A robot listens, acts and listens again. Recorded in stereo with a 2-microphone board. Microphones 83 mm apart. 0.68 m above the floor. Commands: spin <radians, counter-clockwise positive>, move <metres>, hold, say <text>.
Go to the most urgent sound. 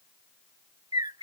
hold
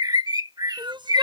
spin -1.31
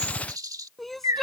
move 1.0
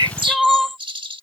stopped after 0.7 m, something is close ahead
say Blocked. The crying is further on, straight ahead.